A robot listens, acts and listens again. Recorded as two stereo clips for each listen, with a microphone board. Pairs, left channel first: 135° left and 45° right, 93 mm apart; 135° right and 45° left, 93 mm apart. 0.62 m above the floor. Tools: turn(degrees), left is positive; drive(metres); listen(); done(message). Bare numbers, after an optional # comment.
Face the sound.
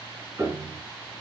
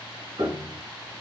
# The piano: 20° left.
turn(20)
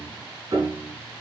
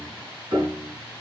done("Found it: a piano, straight ahead, 2 to 4 m away.")